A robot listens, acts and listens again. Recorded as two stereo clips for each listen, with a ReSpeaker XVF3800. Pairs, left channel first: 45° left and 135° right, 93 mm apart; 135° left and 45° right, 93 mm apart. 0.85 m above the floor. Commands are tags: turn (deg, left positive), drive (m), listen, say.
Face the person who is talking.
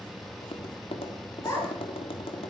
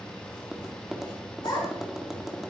<turn deg="110"/>
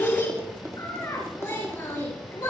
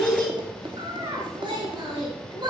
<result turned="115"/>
<say>Facing the child speaking, over 4 m away.</say>